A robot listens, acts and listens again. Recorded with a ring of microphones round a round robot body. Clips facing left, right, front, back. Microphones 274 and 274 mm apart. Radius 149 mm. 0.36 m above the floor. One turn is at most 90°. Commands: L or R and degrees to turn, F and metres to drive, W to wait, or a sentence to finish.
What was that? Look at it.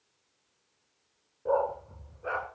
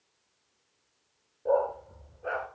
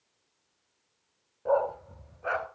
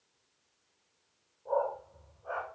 Facing the dog barking, 2 to 4 m away.